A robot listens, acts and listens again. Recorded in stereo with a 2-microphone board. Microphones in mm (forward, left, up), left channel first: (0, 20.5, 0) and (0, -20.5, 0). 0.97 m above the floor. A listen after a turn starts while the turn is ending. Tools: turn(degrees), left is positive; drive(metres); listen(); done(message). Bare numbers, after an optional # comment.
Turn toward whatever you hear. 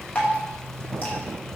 # The dripping: about 35° left or 145° left.
turn(35)
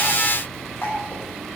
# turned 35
# So it is at 105° left.
turn(105)
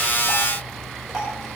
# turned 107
listen()
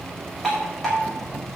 done("Facing the dripping.")